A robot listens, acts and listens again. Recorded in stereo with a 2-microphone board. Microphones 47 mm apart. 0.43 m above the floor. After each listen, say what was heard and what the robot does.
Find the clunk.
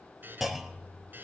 Turn 30° right.
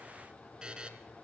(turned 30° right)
Keep listening.
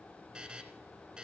I heard a clunk, but can't make it out now. It was about 25° left or 145° right.